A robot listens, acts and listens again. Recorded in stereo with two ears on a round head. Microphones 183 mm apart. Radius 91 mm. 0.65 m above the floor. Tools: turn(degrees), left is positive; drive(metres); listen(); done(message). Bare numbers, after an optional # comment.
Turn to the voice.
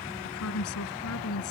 turn(90)
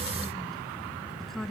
done("Facing the woman speaking.")